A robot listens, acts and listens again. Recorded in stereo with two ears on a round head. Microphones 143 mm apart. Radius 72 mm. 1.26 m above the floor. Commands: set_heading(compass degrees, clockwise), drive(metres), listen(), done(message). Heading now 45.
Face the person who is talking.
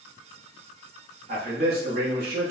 set_heading(100)
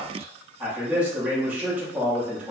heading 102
done("Facing the man speaking, 1 to 2 m away.")